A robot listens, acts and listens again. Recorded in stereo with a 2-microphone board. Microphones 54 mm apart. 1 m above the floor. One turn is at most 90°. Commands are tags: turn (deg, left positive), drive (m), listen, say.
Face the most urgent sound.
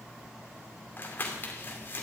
<listen/>
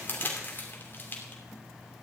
<listen/>
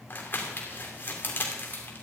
<say>I can't make out anything urgent to turn to.</say>